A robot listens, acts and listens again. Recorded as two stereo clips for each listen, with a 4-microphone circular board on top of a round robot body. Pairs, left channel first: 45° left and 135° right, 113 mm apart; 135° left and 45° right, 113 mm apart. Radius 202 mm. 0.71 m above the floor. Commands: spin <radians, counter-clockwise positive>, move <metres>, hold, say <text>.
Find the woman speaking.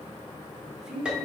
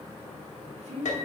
spin -0.87
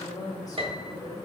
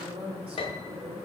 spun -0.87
spin -0.17
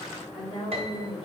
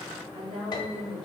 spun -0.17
say Found it: a woman speaking, straight ahead, 2 to 4 m away.